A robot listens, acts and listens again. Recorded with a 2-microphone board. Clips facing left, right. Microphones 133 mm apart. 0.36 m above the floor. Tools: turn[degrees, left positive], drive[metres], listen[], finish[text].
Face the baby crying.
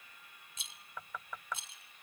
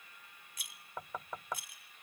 Action: listen[]
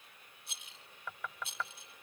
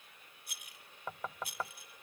Action: listen[]
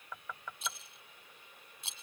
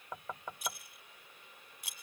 Action: finish[I can't make out a baby crying to turn to.]